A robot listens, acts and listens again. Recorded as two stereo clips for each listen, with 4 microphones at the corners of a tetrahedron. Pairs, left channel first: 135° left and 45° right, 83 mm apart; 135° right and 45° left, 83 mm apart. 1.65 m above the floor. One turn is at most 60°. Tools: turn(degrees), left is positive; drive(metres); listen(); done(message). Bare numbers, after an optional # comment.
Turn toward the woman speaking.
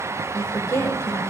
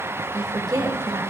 # The woman speaking: 80° left.
turn(60)
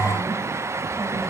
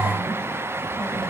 # Nothing new. It was at 20° left.
turn(20)
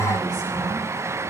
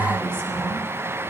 listen()
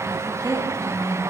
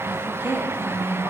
# The woman speaking is now 20° right.
turn(-20)
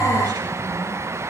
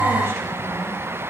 listen()
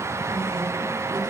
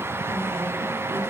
listen()
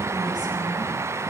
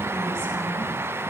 done("I heard a woman speaking from this way, but can't make it out now.")